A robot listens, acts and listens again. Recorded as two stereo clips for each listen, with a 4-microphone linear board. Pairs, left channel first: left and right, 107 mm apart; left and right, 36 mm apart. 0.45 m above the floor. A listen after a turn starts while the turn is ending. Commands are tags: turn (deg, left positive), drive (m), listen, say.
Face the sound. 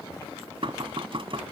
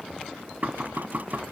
<turn deg="-55"/>
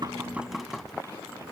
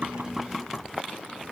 <say>Facing the knocking.</say>